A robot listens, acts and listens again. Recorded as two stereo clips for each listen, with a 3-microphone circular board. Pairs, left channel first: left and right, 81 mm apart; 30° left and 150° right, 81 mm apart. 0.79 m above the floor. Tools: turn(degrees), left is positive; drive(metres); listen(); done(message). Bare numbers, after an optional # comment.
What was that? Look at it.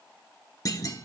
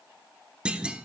# The clunk: 135° left.
turn(135)
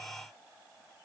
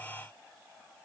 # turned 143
# Nothing new. It was at 10° right.
turn(-10)
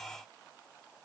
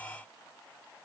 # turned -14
done("I heard a clunk from this way, but can't make it out now.")